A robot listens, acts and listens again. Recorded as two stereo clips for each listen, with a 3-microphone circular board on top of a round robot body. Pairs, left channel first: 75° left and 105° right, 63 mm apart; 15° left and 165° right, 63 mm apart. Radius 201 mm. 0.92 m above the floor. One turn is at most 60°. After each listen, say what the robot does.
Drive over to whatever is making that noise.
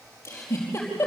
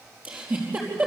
Turn 60° left.
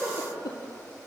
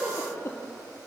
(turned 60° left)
Turn 60° left.
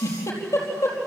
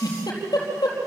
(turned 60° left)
Turn 40° left.
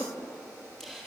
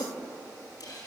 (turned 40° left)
Turn 10° right.
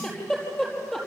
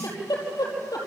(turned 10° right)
Drive 1.0 m forward.
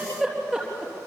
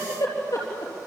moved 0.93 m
Turn 15° right.
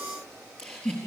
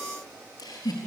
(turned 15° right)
Drive 1.0 m forward.
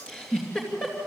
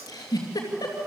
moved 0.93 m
Drive 1.0 m forward.
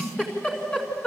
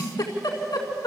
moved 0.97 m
Drive 1.0 m forward.
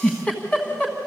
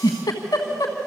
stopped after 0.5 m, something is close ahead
I am next to the giggle.